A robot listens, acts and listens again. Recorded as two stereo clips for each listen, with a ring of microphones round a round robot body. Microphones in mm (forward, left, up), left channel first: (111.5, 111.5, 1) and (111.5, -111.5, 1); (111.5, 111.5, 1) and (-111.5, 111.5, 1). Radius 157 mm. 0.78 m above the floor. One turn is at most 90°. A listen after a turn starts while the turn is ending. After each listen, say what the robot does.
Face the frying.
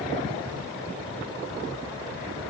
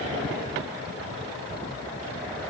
Keep listening.
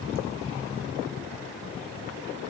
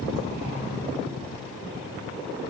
Keep listening.
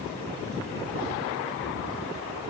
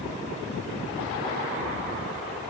I can't make out frying to turn to.